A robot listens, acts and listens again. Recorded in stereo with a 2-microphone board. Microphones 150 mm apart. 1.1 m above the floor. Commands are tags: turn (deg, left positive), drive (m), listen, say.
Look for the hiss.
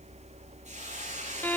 <turn deg="-55"/>
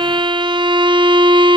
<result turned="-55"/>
<listen/>
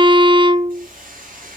<turn deg="-70"/>
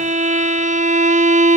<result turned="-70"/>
<listen/>
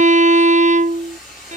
<say>Found it: a hiss, straight ahead.</say>